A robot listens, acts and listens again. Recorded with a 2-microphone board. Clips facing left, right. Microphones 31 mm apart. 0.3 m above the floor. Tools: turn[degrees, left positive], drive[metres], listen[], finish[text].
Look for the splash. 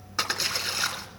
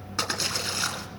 Action: turn[30]
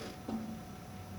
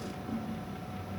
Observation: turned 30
Action: listen[]
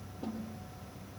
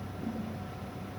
Action: finish[I heard a splash, but can't make it out now. It was about 25° right or 145° left.]